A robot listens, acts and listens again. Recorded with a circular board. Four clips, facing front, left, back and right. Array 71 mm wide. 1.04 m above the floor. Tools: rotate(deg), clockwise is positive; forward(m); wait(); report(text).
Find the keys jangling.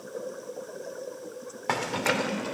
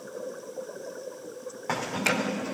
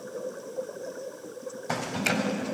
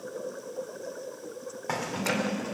rotate(-10)
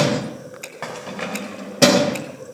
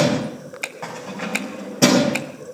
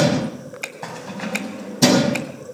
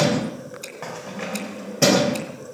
report("Facing the keys jangling, over 4 m away.")